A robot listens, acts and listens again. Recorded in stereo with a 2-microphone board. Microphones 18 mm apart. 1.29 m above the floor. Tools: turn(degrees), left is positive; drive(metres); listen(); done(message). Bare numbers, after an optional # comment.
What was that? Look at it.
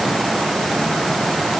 listen()
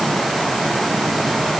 listen()
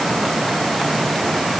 done("I can't make out anything.")